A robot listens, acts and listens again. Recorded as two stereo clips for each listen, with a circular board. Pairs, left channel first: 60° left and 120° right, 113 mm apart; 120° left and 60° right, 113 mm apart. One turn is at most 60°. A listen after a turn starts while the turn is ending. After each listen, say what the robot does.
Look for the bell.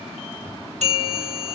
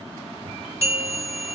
Turn 60° right.
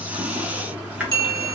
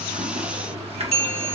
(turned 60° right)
Turn 60° right.
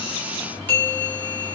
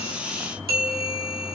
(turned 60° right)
Turn 15° right.
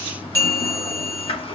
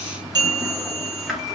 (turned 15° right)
Facing the bell.